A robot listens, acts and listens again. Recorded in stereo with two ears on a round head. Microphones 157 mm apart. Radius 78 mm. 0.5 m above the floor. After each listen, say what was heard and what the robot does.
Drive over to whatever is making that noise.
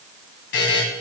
Turn 90° left.
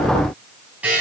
So it is at 10° right. Turn 10° right.
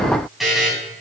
Drive 1.0 m forward.
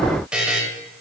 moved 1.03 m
Drive 1.0 m forward.
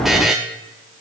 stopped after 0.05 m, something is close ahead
Arrived at the buzzer, straight ahead.